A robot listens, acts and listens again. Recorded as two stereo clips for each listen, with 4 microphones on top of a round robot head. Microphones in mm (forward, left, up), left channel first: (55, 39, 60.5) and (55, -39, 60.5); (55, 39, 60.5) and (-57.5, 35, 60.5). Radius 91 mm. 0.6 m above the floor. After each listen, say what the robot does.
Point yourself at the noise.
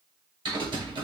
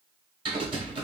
Turn 125° right.
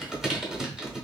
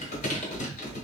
Turn 10° right.
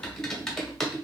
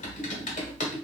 Facing the typing on a keyboard, 1 to 2 m away.